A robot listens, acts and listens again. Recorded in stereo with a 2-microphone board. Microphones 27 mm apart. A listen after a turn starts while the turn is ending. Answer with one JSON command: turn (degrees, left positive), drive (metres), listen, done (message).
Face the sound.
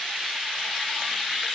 {"listen": true}
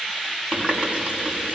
{"turn": -35}
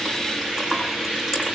{"done": "Found it: a running tap, straight ahead, over 4 m away."}